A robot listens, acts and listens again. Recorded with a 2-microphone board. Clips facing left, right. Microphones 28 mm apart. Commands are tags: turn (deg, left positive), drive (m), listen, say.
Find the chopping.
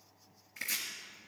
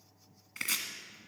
<turn deg="-70"/>
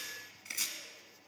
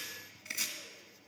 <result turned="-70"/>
<say>Facing the chopping.</say>